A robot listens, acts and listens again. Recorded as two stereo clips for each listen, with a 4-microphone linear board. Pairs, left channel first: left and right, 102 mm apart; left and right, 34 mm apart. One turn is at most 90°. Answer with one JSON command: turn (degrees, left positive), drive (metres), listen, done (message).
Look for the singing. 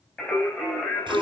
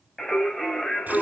{"turn": 20}
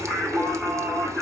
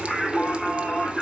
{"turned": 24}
{"turn": 30}
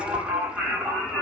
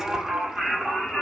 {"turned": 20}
{"done": "Facing the singing, 2 to 4 m away."}